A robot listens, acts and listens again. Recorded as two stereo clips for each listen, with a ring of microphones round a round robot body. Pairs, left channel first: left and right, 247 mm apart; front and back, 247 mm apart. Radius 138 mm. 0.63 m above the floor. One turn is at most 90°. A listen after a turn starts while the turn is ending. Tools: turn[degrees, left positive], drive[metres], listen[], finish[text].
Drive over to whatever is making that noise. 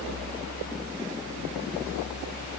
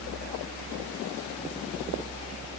Action: listen[]
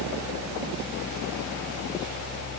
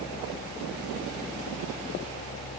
Action: listen[]
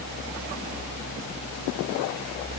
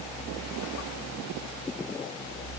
Action: finish[I can't make out anything.]